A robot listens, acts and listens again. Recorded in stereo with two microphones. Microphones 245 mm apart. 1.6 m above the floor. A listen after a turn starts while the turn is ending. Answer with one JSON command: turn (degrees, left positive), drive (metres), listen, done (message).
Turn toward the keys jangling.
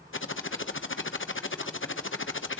{"listen": true}
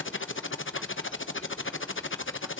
{"listen": true}
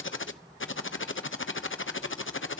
{"done": "I can't make out keys jangling to turn to."}